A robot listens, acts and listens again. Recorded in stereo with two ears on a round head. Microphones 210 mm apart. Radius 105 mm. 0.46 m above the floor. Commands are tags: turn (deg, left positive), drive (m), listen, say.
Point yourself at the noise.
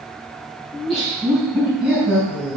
<turn deg="-30"/>
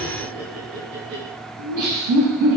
<turn deg="-125"/>
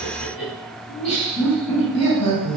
<turn deg="15"/>
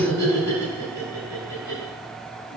<say>Facing the laughter, 2 to 4 m away.</say>